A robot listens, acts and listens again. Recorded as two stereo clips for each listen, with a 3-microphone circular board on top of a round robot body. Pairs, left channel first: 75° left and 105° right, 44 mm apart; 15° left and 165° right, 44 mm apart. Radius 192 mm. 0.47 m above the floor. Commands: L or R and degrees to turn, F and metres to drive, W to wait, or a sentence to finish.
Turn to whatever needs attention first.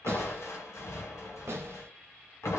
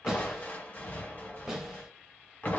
W
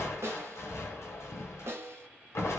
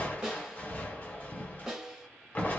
W
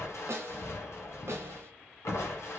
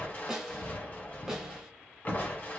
I can't make out anything urgent to turn to.